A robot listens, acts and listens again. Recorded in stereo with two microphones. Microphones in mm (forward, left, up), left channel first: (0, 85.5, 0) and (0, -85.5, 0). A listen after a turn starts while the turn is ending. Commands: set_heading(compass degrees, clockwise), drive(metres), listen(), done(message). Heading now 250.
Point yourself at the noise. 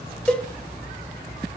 set_heading(220)
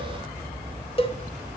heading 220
set_heading(75)
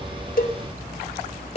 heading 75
set_heading(35)
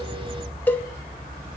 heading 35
set_heading(25)
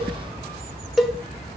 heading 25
done("Facing the cowbell.")